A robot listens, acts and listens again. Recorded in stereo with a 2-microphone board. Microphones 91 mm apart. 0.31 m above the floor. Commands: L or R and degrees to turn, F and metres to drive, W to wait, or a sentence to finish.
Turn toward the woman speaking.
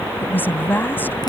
L25
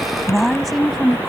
Found it: a woman speaking, straight ahead.